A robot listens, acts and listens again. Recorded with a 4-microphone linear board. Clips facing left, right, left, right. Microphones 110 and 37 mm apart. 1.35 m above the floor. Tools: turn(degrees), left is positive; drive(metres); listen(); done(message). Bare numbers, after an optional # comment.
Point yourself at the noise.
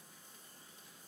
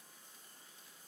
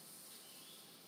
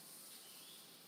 listen()
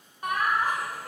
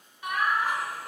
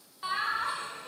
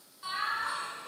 # The laughter: about 40° left or 140° left.
turn(40)
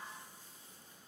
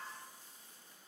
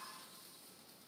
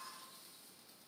listen()
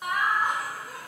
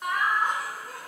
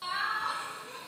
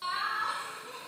done("Found it: laughter, straight ahead.")